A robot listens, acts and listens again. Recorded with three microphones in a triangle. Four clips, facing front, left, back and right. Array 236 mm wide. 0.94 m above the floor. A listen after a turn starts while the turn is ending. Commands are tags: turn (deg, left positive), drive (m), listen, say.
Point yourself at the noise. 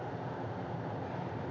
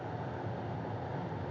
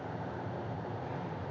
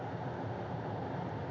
<listen/>
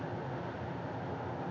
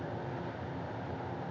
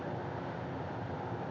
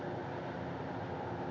<listen/>
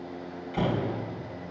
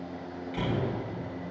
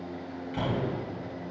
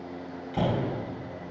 <turn deg="-90"/>
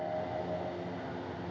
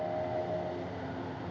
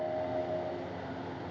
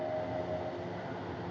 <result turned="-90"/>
<say>Facing where the door slam came from. I can't hear it now.</say>